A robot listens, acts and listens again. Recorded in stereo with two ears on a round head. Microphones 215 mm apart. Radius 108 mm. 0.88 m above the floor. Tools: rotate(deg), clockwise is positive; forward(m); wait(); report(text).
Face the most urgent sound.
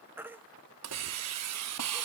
rotate(30)
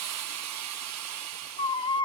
rotate(-25)
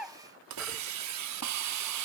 report("Found it: a baby crying, straight ahead, 1 to 2 m away.")